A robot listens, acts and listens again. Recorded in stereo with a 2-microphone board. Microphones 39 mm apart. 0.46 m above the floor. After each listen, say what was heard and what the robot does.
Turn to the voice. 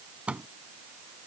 Keep listening.
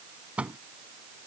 Keep listening.
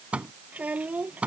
The child speaking: about 40° right or 140° right. Turn 40° right.
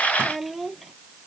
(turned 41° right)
Found it: a child speaking, straight ahead.